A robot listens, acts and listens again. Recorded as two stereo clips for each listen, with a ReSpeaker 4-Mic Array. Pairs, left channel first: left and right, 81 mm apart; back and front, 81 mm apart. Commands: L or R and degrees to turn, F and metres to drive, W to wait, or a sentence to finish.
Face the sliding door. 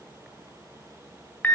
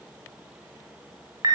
W
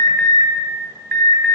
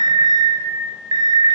W
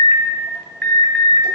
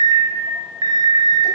I can't make out a sliding door, only an alarm.